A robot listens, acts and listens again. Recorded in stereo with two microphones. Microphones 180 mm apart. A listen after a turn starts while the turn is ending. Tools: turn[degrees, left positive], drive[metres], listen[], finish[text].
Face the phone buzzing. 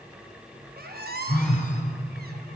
Action: turn[30]
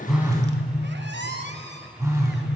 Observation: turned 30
Thought: So it is at 20° right.
Action: turn[-20]
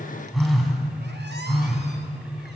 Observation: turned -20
Action: finish[Found it: a phone buzzing, straight ahead, 1 to 2 m away.]